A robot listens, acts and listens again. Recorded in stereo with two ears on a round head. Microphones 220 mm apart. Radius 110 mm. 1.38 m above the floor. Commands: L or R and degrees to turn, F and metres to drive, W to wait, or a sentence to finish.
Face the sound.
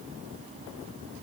W
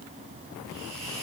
R25
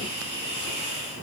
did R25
R130
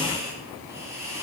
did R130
R10
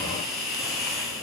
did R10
Facing the hiss, over 4 m away.